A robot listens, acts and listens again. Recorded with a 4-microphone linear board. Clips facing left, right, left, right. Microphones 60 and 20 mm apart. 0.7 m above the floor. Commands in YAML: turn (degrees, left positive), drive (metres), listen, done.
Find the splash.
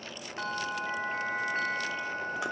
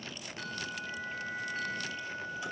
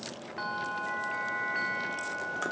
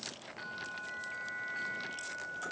listen: true
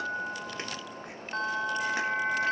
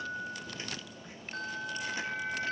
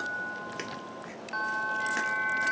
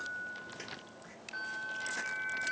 listen: true
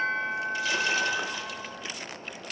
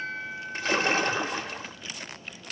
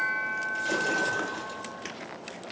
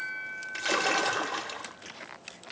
turn: -40
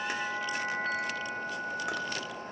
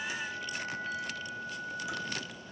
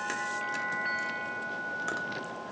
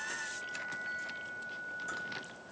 listen: true
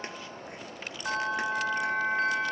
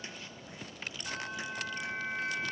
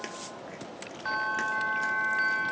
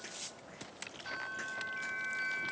done: "I heard a splash, but can't make it out now. It was about straight ahead or 100° right."